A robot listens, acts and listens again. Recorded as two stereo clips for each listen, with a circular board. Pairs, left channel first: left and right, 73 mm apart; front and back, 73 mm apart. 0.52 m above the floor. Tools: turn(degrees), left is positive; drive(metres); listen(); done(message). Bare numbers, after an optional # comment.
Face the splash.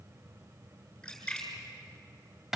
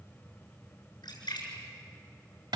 # The splash: 10° left.
turn(10)
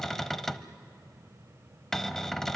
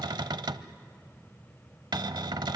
done("I heard a splash from this way, but can't make it out now.")